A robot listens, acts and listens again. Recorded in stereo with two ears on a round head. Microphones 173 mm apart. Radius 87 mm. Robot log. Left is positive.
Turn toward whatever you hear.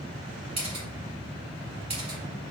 note: The camera shutter: about 30° right or 150° right.
cmd yaw -30
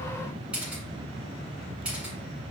end: Facing the camera shutter.